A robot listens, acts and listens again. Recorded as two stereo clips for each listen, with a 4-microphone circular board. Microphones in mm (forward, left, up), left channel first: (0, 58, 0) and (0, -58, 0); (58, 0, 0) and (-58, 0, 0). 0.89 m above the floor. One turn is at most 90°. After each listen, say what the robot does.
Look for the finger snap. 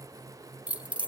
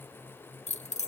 Keep listening.
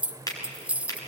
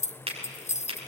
Turn 90° left.
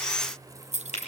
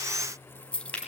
Turn 80° left.
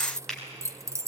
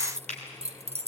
Found it: a finger snap, straight ahead, over 4 m away.